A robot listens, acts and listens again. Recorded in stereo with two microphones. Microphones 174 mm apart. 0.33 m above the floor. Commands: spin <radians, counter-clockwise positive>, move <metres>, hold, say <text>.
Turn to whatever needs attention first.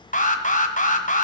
spin 0.79
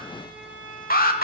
spin 1.31
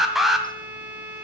say Found it: an alarm, straight ahead.